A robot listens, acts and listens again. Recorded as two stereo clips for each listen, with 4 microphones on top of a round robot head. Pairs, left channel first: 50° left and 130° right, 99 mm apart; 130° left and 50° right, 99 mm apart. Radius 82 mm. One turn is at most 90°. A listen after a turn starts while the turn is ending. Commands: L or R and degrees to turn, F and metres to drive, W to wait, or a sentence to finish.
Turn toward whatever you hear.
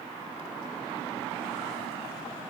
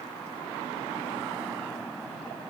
W
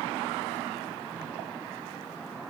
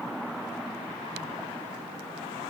W
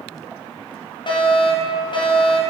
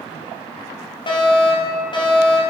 L90
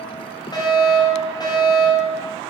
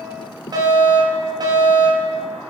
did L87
Facing the fire alarm.